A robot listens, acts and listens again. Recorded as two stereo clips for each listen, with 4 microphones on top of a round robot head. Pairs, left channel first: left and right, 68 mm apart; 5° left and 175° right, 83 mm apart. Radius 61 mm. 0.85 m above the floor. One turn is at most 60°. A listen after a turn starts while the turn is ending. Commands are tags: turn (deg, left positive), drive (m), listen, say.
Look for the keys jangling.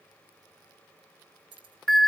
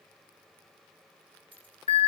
<turn deg="-60"/>
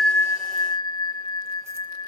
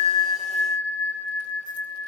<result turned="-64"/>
<turn deg="-40"/>
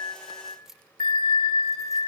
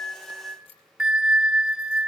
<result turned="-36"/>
<say>Found it: keys jangling, straight ahead.</say>